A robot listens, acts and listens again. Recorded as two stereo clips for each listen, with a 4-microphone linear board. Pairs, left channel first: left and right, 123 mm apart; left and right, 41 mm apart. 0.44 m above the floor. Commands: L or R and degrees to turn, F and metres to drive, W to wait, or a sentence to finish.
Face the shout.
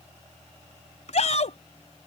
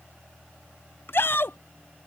L65
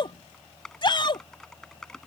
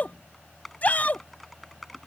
L45
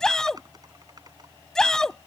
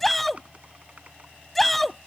Found it: a shout, straight ahead.